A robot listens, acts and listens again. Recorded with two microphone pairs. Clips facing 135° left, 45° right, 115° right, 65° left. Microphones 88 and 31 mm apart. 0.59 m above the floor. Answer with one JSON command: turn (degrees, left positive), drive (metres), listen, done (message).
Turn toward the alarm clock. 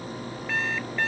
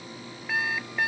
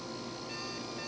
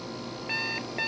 {"turn": 35}
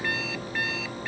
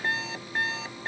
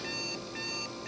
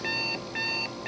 {"turn": 15}
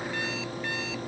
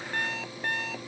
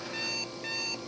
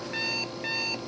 {"done": "Found it: an alarm clock, straight ahead."}